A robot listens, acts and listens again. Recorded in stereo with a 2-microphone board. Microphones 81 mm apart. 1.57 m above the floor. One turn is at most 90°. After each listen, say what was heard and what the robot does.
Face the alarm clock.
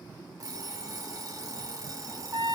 The alarm clock: about 45° right or 135° right. Turn 45° right.
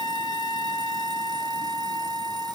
Keep listening.
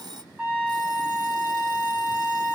So it is at 85° right. Turn 85° right.
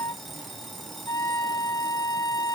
Found it: an alarm clock, straight ahead, 1 to 2 m away.